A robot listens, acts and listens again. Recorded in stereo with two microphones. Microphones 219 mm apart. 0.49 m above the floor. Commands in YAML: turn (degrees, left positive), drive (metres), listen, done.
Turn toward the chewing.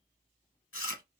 turn: 70
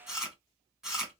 done: "Found it: chewing, straight ahead, under 1 m away."